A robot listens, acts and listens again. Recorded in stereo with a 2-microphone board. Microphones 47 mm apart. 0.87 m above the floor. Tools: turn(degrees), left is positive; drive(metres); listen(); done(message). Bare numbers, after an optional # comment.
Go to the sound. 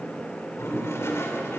# The toilet flushing: about 75° left or 105° left.
turn(75)
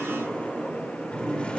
# So it is at 25° left.
turn(25)
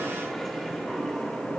drive(1.0)
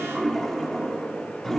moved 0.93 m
# The toilet flushing is now 10° left.
turn(10)
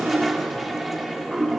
drive(1.0)
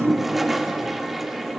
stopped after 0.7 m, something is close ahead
done("Arrived at the toilet flushing, straight ahead.")